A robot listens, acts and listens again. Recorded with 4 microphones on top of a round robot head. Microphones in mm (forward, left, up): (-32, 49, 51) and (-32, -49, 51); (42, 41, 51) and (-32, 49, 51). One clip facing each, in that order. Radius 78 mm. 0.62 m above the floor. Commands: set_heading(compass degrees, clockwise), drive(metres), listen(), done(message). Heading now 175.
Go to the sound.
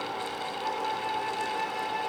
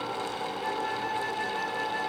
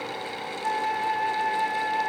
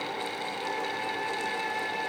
set_heading(275)
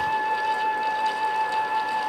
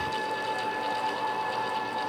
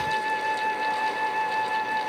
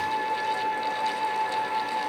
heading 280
drive(1.0)
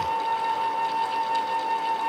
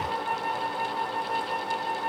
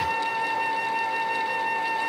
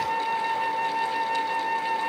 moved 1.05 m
drive(1.0)
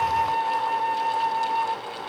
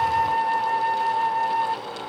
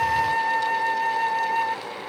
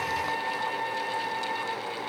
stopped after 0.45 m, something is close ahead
done("Arrived at the flute, straight ahead.")